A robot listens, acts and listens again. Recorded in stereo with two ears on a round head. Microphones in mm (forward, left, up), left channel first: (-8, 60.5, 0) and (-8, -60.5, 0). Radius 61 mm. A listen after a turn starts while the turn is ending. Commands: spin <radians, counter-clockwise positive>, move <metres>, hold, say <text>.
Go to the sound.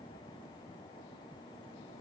hold
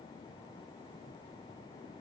hold
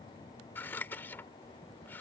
spin 0.52
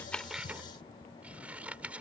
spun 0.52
spin -0.17
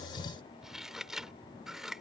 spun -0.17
move 1.0
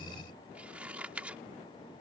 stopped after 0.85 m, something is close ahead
spin -0.26
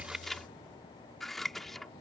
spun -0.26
say I am next to the scissors.